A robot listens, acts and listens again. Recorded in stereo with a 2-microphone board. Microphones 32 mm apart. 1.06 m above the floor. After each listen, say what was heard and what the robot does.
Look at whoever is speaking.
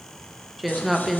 Turn 30° left.
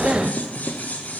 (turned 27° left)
Keep listening.
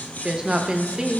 So it is at 30° right. Turn 30° right.
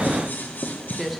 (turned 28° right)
Found it: a woman speaking, straight ahead, under 1 m away.